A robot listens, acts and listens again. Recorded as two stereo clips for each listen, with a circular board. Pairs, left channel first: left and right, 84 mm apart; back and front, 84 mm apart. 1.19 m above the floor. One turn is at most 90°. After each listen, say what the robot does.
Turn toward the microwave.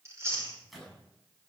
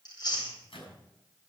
Turn 90° left.
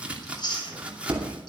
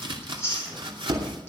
Turn 90° left.
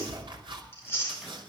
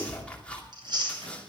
Keep listening.
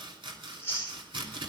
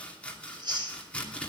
Facing where the microwave came from. I can't hear it now.